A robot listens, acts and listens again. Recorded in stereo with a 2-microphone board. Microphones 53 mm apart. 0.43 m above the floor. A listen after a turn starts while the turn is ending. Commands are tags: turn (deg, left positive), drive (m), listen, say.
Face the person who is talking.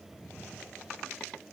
<listen/>
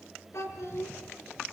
<turn deg="65"/>
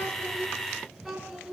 <say>Facing the child speaking.</say>